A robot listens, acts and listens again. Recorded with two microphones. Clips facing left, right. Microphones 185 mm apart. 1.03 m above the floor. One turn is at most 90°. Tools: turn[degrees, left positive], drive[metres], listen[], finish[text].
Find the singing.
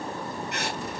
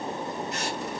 Action: listen[]
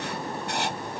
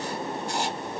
Action: listen[]
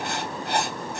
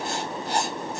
Action: finish[I can't make out singing, only writing.]